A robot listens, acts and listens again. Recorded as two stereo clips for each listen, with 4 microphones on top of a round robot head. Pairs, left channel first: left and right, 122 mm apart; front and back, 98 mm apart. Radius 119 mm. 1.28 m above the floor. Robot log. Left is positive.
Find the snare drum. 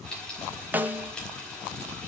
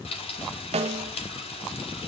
note: The snare drum: 165° right.
cmd yaw -165
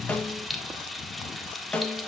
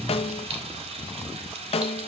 note: The snare drum is now 10° left.
cmd yaw +10
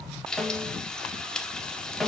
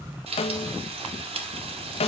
end: Found it: a snare drum, straight ahead, 1 to 2 m away.